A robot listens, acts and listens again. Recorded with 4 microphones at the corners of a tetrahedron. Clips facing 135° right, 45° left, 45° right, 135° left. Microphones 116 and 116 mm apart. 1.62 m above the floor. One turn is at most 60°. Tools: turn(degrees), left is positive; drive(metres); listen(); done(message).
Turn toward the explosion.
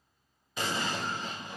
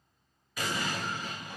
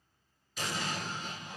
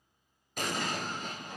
turn(degrees=60)
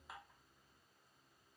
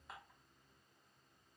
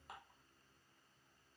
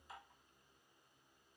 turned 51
turn(degrees=60)
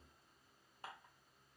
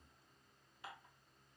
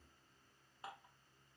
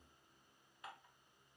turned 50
turn(degrees=60)
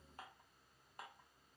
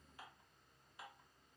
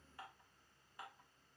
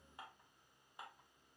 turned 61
done("Facing where the explosion came from. I can't hear it now.")